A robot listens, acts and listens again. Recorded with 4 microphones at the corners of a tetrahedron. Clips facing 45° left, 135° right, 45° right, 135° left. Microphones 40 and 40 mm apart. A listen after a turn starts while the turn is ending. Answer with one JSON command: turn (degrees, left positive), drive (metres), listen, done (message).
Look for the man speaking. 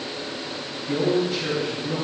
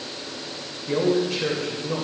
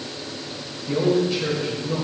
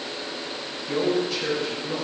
{"turn": -125}
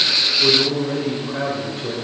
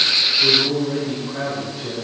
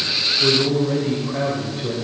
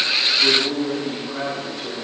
{"done": "Found it: a man speaking, straight ahead."}